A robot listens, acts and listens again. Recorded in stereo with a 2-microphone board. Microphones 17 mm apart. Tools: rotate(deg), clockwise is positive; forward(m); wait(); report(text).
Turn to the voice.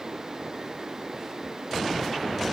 wait()
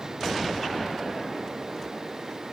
wait()
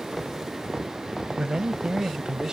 rotate(50)
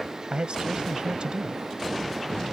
rotate(80)
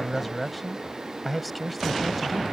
report("Found it: a man speaking, straight ahead.")